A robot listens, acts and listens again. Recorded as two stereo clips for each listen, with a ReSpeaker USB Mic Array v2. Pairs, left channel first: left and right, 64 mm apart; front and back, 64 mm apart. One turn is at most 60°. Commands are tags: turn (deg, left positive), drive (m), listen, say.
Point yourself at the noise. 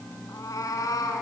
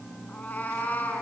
<turn deg="60"/>
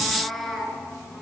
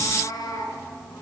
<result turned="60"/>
<say>Found it: a cat meowing, straight ahead, over 4 m away.</say>